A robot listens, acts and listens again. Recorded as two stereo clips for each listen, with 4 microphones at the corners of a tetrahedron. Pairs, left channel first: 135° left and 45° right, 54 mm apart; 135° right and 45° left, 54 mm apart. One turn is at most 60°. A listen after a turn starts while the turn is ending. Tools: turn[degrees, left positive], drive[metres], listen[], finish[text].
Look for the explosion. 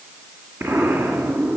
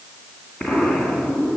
Thought: The explosion: 65° right.
Action: turn[-60]
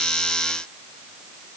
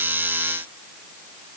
Action: finish[Facing where the explosion came from. I can't hear it now.]